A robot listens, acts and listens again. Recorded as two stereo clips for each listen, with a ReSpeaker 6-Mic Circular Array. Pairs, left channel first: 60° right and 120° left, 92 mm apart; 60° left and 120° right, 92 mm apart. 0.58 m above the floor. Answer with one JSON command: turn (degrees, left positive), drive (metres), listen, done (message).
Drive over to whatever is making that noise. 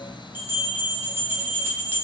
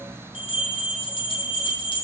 {"turn": 55}
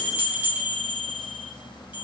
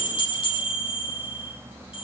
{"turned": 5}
{"turn": 50}
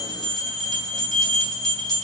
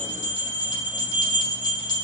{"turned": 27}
{"turn": 20}
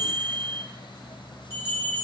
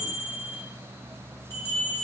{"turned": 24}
{"drive": 1.0}
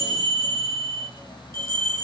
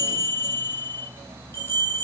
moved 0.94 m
{"drive": 1.0}
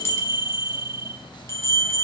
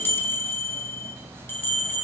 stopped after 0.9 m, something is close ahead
{"done": "Arrived at the bell, straight ahead."}